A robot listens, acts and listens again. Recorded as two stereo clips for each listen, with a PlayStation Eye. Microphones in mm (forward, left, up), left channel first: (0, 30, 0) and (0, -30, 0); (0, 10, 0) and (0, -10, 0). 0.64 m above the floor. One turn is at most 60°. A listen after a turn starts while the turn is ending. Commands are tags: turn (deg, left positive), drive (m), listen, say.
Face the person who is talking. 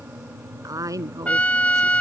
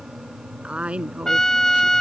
<turn deg="-60"/>
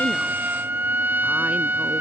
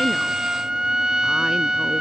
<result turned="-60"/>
<listen/>
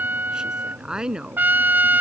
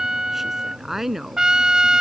<turn deg="-15"/>
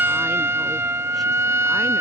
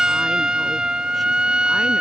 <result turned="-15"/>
<listen/>
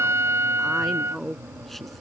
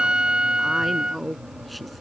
<say>Facing the woman speaking.</say>